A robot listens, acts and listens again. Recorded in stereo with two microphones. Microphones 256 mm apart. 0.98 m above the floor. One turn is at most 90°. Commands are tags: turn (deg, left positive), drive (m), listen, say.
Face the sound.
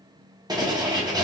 <turn deg="-30"/>
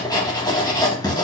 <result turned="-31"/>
<turn deg="15"/>
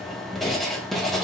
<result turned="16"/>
<say>Found it: writing, straight ahead, 1 to 2 m away.</say>